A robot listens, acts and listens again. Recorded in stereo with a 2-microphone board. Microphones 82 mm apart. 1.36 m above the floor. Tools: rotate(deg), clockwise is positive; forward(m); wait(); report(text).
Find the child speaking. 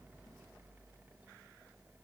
wait()
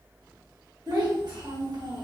rotate(55)
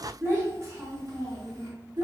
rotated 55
rotate(50)
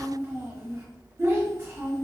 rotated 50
rotate(25)
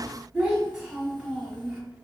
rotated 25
report("Found it: a child speaking, straight ahead, 1 to 2 m away.")